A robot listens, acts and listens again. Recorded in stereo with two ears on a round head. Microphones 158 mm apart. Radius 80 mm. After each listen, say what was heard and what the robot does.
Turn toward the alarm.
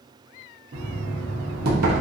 Keep listening.
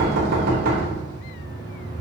Keep listening.
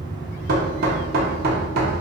I can't make out an alarm to turn to.